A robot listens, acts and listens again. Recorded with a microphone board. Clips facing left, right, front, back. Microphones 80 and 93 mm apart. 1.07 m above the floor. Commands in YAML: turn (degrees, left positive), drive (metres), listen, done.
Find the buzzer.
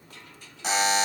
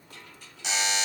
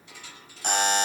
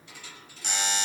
turn: 40
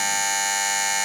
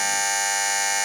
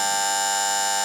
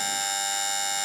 done: "Found it: a buzzer, straight ahead, under 1 m away."